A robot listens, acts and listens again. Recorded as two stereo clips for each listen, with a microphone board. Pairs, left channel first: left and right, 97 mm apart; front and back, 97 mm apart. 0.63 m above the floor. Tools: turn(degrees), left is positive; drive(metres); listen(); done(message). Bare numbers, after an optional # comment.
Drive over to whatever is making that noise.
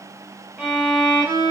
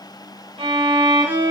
# The violin: 170° right.
turn(-170)
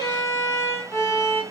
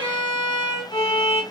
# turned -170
# The violin is now 35° left.
turn(35)
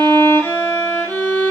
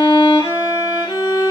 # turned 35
# The violin is now 25° left.
turn(25)
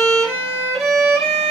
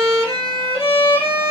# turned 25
drive(1.0)
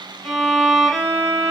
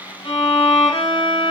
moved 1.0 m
drive(1.0)
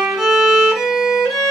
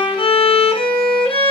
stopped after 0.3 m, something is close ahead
done("I am next to the violin.")